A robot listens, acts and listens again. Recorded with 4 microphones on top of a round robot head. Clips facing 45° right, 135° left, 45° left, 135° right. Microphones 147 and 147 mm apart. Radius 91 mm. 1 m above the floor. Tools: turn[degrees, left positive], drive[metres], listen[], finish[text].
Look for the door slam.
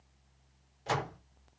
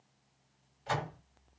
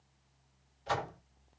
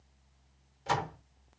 Thought: The door slam: 95° right.
Action: turn[-95]
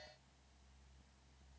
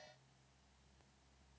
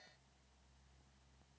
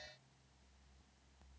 Action: finish[I heard a door slam from this way, but can't make it out now.]